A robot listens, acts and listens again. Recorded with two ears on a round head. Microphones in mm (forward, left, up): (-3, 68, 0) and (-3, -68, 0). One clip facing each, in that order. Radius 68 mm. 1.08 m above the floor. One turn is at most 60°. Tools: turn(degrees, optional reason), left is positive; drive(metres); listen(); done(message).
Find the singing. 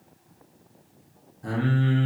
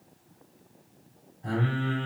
turn(degrees=60, reason="The singing: about 65° left or 115° left.")
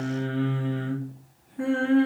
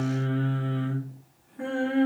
turn(degrees=50, reason="So it is at 50° left.")
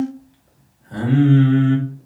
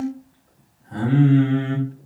turn(degrees=50, reason="The singing is now 50° left.")
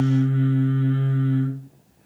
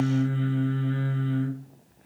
turn(degrees=-25, reason="The singing is now 25° right.")
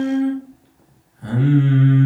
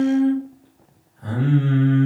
turn(degrees=20, reason="The singing is now 20° left.")
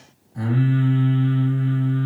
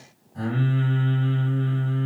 done("Facing the singing, 1 to 2 m away.")